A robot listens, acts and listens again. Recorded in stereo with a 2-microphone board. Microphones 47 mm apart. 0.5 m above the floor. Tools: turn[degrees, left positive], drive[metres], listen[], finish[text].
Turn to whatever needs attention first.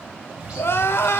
Thought: The crying: about 60° left or 120° left.
Action: turn[60]
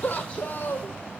Thought: So it is at 50° left.
Action: turn[50]
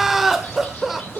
Thought: The crying is now 10° right.
Action: turn[-10]
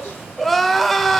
Action: finish[Found it: crying, straight ahead, 1 to 2 m away.]